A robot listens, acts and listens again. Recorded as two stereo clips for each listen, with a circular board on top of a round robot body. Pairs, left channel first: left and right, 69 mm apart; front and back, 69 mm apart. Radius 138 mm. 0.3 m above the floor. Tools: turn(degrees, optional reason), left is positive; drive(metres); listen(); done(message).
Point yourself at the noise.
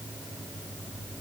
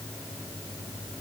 listen()
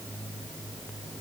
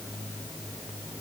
listen()
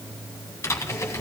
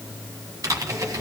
turn(degrees=140, reason="The typing on a keyboard: 140° left.")
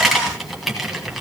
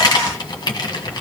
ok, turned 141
done("Found it: typing on a keyboard, straight ahead.")